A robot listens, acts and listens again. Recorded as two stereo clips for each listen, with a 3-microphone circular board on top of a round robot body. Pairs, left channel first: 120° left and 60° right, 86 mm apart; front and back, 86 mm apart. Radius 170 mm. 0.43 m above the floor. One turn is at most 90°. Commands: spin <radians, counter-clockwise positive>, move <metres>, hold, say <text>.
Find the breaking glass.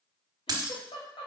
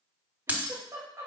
spin -1.57
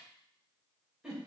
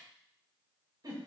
spin -0.26
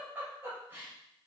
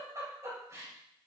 say Facing where the breaking glass came from. I can't hear it now.